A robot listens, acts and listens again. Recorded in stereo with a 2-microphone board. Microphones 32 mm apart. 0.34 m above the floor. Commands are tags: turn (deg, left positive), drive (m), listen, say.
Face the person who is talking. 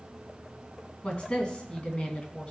<turn deg="30"/>
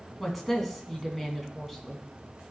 <say>Facing the woman speaking, 2 to 4 m away.</say>